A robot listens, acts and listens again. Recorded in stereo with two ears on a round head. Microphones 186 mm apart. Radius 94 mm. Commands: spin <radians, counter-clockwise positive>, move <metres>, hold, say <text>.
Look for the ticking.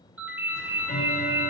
spin 0.52
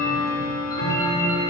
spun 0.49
spin 2.01
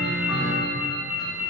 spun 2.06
say Found it: ticking, straight ahead.